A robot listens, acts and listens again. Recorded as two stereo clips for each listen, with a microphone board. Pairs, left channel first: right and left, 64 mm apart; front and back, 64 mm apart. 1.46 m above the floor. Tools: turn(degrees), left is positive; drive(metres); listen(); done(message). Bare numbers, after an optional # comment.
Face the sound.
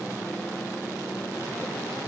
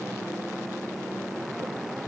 listen()
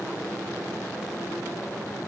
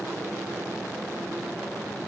listen()
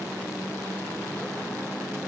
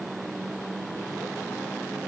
done("I can't make out anything to turn to.")